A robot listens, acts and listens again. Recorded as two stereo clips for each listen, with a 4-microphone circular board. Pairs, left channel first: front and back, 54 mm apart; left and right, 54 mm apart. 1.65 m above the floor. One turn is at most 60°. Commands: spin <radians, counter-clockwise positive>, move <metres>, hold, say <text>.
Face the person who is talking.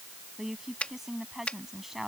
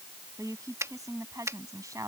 spin -1.05
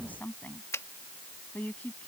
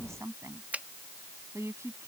spin -1.05
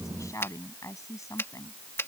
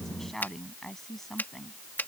say Facing the woman speaking.